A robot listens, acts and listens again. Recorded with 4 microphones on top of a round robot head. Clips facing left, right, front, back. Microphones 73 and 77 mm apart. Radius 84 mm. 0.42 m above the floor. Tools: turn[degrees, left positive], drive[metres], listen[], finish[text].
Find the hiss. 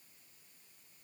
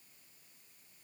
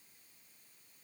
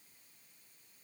Action: listen[]
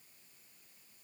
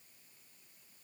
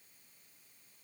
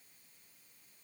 Action: listen[]
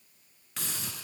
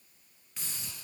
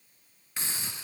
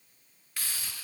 Thought: The hiss: 70° left.
Action: turn[70]
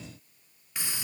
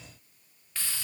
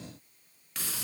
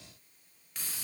Thought: The hiss is now 15° left.
Action: turn[15]
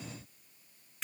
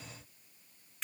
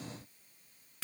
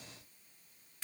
Action: finish[Found it: a hiss, straight ahead, 1 to 2 m away.]